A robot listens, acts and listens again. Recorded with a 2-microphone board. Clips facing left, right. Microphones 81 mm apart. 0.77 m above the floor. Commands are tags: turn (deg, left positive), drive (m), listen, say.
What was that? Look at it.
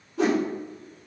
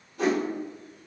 <turn deg="90"/>
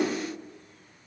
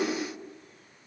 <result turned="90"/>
<listen/>
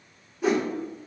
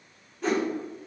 <say>Facing the whoosh.</say>